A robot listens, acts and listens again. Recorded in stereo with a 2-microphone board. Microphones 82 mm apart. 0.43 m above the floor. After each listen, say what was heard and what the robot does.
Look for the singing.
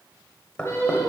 The singing: about 30° left or 150° left. Turn 30° left.
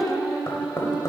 So it is at 15° right. Turn 15° right.
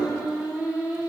The singing is now 20° right. Turn 20° right.
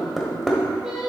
The singing is now 10° right. Turn 10° right.
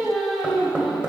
The singing is now 10° right. Turn 10° right.
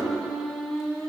Found it: singing, straight ahead.